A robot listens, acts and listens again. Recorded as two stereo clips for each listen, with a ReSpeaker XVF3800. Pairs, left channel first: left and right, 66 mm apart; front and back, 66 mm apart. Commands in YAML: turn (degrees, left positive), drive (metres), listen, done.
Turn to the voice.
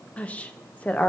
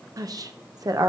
turn: 160
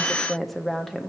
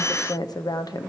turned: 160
done: "Facing the woman speaking, under 1 m away."